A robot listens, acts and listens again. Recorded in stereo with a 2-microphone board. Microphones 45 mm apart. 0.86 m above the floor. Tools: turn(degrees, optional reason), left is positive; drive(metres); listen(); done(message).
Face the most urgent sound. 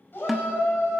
turn(degrees=50, reason="The shout: about 50° left or 130° left.")
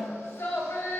turn(degrees=75, reason="So it is at 75° left.")
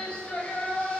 turn(degrees=25, reason="The shout is now 25° left.")
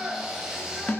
turn(degrees=-10, reason="The shout is now 10° right.")
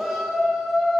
done("Found it: a shout, straight ahead, 2 to 4 m away.")